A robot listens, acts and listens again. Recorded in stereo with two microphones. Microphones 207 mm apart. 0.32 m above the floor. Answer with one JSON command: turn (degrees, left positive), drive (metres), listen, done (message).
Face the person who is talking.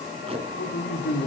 {"turn": 55}
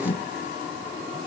{"listen": true}
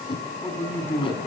{"turn": 10}
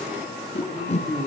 {"done": "Facing the man speaking."}